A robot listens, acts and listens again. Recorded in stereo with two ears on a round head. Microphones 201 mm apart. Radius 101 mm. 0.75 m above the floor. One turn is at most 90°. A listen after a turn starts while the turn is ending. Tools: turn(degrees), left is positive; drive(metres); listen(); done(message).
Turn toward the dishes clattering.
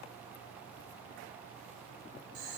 listen()
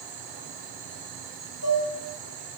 turn(degrees=90)
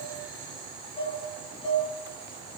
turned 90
turn(degrees=10)
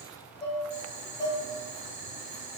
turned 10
done("Found it: dishes clattering, straight ahead.")